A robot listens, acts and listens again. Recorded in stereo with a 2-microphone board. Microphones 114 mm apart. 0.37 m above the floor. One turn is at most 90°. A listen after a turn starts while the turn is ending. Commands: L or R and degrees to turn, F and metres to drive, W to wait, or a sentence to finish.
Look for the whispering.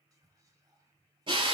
R30
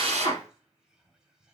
Found it: whispering, straight ahead.